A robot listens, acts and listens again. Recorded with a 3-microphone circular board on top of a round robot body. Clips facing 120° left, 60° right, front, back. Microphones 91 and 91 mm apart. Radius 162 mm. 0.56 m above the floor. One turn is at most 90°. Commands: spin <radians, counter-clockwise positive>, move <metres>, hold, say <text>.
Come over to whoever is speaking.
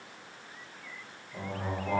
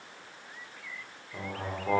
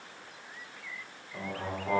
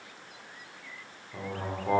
spin -1.57
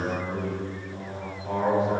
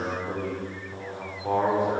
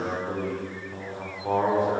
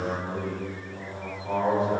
spin -0.52
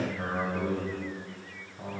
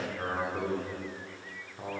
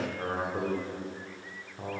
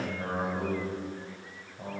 move 1.0
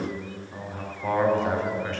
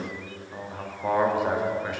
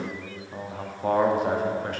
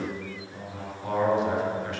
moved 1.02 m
spin 0.35
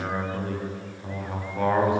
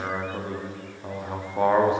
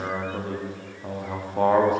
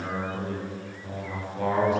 move 1.0
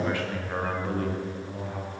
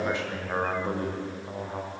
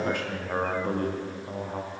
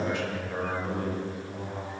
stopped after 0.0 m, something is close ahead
say Arrived at the man speaking, straight ahead.